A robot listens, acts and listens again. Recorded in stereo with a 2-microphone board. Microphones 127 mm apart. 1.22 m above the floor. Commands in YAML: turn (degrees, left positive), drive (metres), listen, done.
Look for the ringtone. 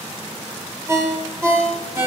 turn: -20
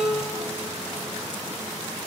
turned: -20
turn: -140
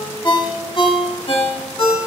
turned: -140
turn: 45
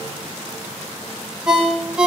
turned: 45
done: "Facing the ringtone."